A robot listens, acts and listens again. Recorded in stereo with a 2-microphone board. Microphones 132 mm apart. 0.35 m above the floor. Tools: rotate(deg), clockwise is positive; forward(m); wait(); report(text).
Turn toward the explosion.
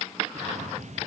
rotate(65)
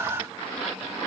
wait()
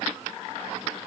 report("I heard an explosion, but can't make it out now. It was about straight ahead or 50° right.")